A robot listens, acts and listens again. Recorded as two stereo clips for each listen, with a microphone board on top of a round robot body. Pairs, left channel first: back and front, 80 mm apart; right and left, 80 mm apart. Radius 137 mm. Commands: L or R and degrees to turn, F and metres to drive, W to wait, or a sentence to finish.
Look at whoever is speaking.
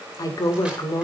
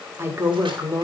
L145
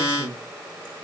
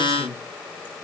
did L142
Facing the woman speaking.